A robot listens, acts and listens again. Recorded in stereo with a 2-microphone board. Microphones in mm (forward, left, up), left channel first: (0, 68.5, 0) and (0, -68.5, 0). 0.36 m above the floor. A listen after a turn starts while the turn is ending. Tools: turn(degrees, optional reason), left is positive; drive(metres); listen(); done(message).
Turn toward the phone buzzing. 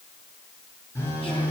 turn(degrees=20, reason="The phone buzzing: about 20° left or 160° left.")
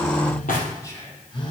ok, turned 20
turn(degrees=135, reason="So it is at 135° left.")
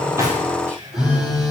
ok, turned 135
done("Found it: a phone buzzing, straight ahead, 2 to 4 m away.")